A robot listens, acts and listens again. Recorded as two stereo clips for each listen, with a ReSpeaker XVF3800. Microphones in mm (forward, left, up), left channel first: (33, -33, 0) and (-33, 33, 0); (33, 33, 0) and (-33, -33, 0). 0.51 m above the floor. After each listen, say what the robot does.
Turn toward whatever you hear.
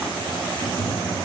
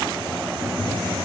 Turn 35° right.
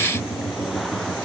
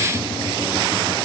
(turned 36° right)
Facing the tapping.